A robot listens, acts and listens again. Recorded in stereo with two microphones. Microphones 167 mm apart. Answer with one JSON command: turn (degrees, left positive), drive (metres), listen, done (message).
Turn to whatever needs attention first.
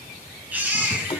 {"turn": -30}
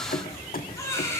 {"turn": 15}
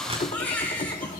{"turn": 10}
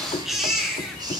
{"done": "Found it: a baby crying, straight ahead."}